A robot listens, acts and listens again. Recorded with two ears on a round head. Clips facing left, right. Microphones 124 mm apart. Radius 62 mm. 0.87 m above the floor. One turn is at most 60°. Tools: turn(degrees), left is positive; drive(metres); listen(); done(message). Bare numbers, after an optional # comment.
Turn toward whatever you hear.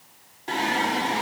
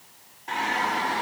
# The singing: about 25° left or 155° left.
turn(25)
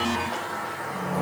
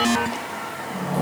# So it is at 35° right.
turn(-35)
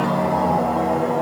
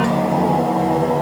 # The singing is now 40° right.
turn(-40)
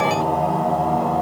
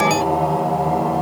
# The singing is now 10° right.
turn(-10)
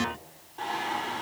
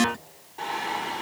done("Found it: singing, straight ahead, 2 to 4 m away.")